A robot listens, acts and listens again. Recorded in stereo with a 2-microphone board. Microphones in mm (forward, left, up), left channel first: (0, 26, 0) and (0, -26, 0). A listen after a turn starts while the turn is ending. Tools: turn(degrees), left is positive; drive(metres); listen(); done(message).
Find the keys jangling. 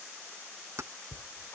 turn(degrees=-65)
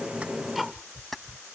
done("Facing the keys jangling.")